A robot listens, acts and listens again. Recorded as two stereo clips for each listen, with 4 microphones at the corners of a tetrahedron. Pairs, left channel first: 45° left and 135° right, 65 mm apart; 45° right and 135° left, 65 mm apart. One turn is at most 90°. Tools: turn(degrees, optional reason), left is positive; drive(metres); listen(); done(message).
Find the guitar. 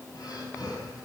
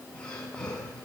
listen()
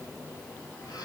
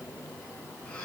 listen()
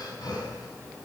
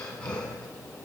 done("I can't make out a guitar to turn to.")